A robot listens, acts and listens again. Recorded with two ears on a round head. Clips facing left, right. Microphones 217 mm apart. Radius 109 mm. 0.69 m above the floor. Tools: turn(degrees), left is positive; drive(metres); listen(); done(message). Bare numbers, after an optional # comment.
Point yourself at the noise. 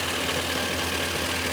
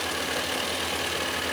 listen()
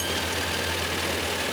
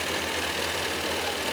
listen()
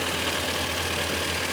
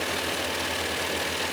done("I can't make out anything to turn to.")